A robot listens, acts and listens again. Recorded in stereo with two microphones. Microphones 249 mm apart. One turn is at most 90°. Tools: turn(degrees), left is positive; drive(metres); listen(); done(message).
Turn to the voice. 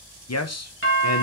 turn(degrees=90)
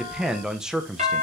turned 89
done("Found it: a man speaking, straight ahead.")